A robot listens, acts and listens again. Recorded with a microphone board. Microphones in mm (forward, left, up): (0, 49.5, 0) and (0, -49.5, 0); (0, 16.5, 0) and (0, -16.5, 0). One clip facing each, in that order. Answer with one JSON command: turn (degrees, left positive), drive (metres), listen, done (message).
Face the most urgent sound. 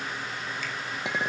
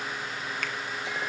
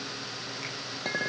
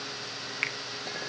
{"listen": true}
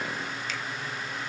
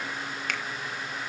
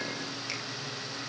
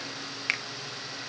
{"listen": true}
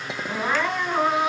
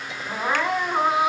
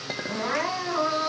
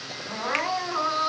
{"turn": -30}
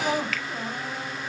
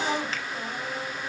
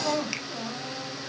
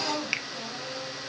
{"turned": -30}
{"turn": 25}
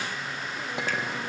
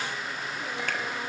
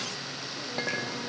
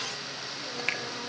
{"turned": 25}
{"listen": true}
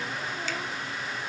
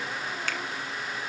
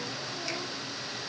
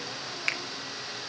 {"listen": true}
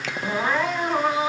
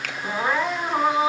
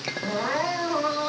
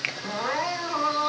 {"done": "Found it: crying, straight ahead, over 4 m away."}